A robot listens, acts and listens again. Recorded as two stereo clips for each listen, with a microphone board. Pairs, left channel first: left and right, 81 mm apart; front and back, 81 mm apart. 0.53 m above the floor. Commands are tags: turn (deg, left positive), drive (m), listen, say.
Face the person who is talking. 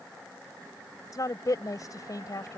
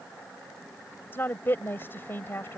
<turn deg="60"/>
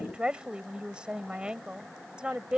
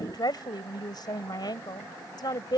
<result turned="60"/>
<turn deg="-15"/>
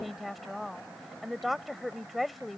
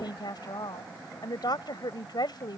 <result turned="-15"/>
<say>Facing the woman speaking.</say>